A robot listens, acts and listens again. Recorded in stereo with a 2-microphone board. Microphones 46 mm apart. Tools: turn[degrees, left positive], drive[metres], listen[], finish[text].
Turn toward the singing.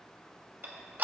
Action: listen[]
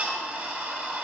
Action: listen[]
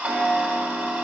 Action: finish[I can't make out singing, only ticking.]